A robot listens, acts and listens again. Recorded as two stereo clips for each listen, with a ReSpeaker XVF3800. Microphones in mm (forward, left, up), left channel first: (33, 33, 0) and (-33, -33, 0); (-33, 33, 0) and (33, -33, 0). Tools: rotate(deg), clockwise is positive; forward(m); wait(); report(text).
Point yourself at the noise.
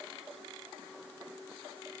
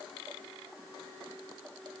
wait()
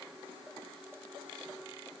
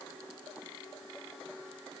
wait()
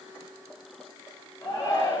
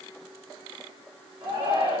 rotate(15)
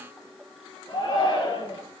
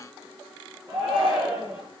report("Facing the shout, over 4 m away.")